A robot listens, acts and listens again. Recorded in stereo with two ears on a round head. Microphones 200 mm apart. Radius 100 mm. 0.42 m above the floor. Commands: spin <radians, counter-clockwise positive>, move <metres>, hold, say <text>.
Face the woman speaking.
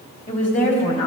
spin 0.70
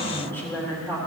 spin 0.26
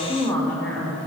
spin 0.17
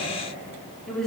say Facing the woman speaking, over 4 m away.